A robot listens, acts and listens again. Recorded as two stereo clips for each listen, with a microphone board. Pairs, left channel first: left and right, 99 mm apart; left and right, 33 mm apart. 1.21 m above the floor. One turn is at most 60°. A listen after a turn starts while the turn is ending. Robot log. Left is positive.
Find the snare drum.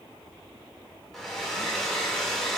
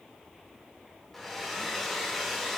cmd idle
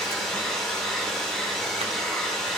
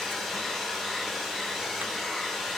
cmd idle
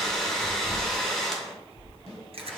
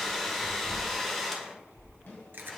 cmd yaw +60
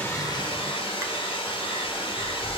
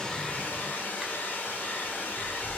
note: Nothing new. It was at 30° left.
cmd yaw +30
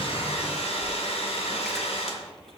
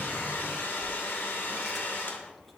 cmd idle
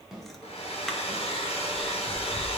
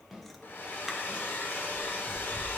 end: Found it: a snare drum, straight ahead.